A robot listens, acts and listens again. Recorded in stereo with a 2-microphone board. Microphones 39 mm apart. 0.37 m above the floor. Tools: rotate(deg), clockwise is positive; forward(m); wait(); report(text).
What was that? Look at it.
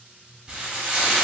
rotate(20)
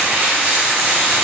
rotate(135)
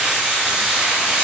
rotate(15)
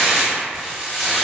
report("Facing the frying, under 1 m away.")